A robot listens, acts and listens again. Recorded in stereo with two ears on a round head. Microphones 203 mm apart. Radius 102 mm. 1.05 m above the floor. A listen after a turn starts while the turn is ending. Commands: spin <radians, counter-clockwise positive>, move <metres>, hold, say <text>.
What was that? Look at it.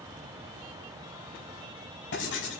spin 0.96
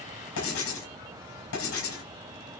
spin 1.13
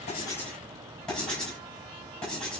say Found it: writing, straight ahead.